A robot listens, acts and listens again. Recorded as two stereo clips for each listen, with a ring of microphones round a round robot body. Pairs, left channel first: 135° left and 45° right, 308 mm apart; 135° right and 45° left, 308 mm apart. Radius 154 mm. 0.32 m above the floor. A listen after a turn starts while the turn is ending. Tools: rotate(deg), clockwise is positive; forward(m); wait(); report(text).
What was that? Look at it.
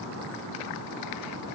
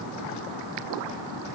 wait()
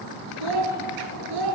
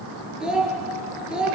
rotate(40)
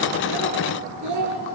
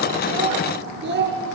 rotate(10)
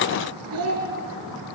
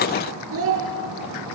report("Found it: a child speaking, straight ahead.")